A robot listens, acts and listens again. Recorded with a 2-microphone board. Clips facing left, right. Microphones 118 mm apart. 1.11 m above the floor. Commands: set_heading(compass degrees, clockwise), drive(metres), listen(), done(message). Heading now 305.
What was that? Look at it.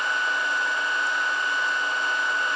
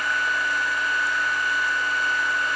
listen()
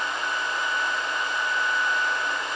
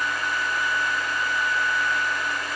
listen()
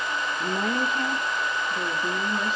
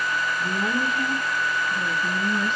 set_heading(265)
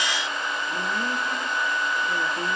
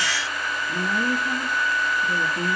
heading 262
done("Facing the woman speaking.")